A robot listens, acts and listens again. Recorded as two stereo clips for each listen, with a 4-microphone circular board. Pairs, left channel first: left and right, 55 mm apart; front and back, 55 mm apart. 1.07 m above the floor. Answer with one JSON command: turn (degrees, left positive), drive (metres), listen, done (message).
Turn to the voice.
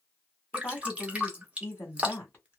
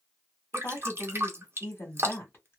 {"turn": 45}
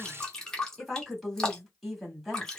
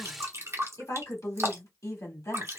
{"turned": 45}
{"done": "Facing the woman speaking, 1 to 2 m away."}